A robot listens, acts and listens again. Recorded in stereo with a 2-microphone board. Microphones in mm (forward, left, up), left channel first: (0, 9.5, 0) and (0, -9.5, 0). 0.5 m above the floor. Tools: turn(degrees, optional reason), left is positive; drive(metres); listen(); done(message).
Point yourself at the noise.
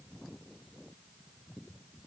listen()
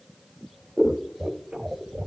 turn(degrees=-60, reason="The scissors: about 60° right or 120° right.")
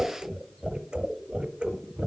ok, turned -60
turn(degrees=-55, reason="So it is at 55° right.")
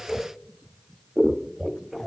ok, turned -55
turn(degrees=-20, reason="The scissors is now 20° right.")
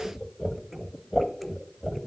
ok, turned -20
done("Facing the scissors.")